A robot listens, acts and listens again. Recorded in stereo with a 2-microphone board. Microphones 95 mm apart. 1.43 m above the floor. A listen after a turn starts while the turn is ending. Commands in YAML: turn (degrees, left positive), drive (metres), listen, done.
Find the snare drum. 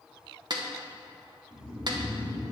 turn: -50
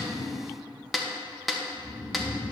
done: "Facing the snare drum."